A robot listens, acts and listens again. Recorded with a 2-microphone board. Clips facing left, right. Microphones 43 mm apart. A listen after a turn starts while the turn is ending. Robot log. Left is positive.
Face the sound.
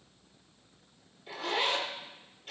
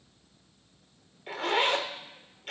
note: The zipper: about 65° right or 115° right.
cmd yaw -65
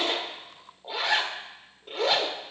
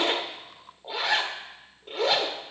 end: Facing the zipper.